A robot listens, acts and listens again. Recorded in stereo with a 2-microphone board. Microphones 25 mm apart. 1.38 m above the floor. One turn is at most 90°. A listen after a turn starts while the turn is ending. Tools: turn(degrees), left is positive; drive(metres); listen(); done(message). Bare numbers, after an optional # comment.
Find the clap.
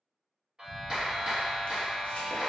# The clap: about 25° right or 155° right.
turn(-25)
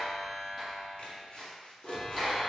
done("Facing the clap.")